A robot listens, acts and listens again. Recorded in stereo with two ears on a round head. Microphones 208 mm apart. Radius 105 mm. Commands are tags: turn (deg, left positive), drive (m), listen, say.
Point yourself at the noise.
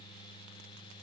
<listen/>
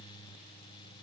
<listen/>
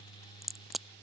<turn deg="30"/>
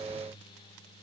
<listen/>
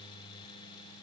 <say>I heard a crack, but can't make it out now. It was about 30° right or 150° left.</say>